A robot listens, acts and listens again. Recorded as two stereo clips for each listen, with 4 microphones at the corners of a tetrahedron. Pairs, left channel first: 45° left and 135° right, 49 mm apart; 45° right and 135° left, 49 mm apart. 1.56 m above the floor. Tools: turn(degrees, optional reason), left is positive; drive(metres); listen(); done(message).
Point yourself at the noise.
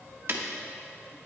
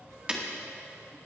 turn(degrees=-160, reason="The breaking glass: 160° right.")
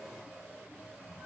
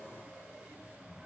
done("Facing where the breaking glass came from. I can't hear it now.")